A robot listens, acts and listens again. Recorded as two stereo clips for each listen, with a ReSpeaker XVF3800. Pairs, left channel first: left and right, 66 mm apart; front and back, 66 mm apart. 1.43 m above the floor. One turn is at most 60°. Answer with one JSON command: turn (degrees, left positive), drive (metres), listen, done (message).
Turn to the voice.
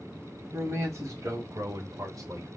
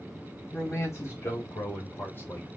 {"turn": -60}
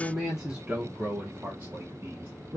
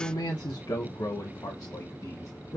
{"turn": -45}
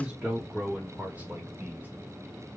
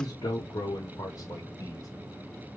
{"turn": -20}
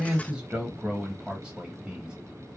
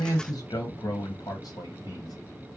{"turn": -10}
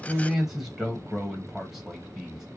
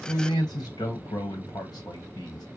{"done": "Facing the man speaking."}